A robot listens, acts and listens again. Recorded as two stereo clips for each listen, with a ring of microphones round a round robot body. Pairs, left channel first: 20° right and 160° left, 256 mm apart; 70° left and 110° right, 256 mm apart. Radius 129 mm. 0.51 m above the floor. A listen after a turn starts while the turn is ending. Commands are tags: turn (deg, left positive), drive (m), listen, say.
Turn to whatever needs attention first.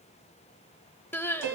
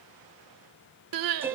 <turn deg="-105"/>
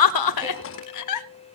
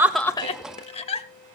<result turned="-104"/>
<say>Found it: crying, straight ahead.</say>